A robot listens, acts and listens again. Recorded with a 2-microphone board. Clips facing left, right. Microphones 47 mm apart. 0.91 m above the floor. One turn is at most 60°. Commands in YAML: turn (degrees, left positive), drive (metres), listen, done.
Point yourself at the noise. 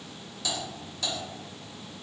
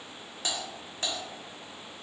turn: -40
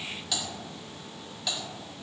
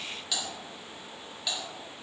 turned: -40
done: "Facing the typing on a keyboard, 1 to 2 m away."